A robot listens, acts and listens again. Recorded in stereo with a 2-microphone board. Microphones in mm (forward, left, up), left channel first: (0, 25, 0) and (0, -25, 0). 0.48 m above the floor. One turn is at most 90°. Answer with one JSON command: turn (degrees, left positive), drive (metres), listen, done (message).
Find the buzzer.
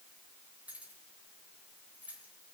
{"listen": true}
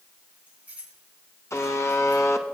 {"turn": 75}
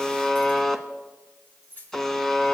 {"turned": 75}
{"done": "Facing the buzzer, under 1 m away."}